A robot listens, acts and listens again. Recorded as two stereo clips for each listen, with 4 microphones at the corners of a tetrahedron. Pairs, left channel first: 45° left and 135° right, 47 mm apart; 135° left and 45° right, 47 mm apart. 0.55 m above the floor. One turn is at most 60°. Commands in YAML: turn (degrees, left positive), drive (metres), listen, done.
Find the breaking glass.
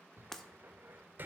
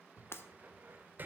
turn: 60
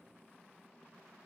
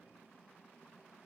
turn: 60
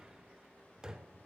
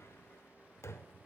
done: "Facing where the breaking glass came from. I can't hear it now."